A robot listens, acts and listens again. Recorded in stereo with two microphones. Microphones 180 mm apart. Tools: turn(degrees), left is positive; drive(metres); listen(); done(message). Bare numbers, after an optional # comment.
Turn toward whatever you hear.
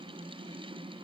listen()
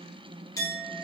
# The clink: about 20° left or 160° left.
turn(20)
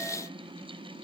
listen()
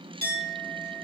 # So it is at 140° left.
turn(140)
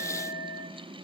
done("Facing the clink, 1 to 2 m away.")